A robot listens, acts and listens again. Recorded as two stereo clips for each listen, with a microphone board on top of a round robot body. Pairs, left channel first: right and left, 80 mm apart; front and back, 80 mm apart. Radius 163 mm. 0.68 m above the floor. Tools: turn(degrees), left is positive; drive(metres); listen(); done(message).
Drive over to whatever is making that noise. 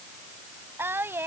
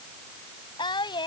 turn(degrees=25)
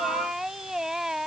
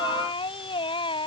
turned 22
drive(metres=1.0)
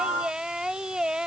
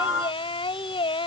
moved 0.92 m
turn(degrees=10)
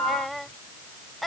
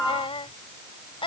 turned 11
drive(metres=1.0)
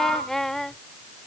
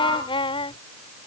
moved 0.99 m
drive(metres=1.0)
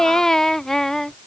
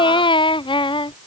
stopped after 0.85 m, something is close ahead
done("I am next to the singing.")